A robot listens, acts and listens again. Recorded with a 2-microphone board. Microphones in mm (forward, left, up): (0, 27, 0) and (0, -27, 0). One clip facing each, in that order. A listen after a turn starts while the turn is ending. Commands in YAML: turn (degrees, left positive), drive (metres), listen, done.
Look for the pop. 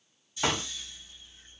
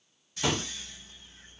turn: 45
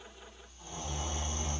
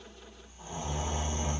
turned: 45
listen: true
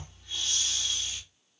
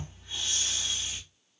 done: "I heard a pop, but can't make it out now. It was about straight ahead or 90° left."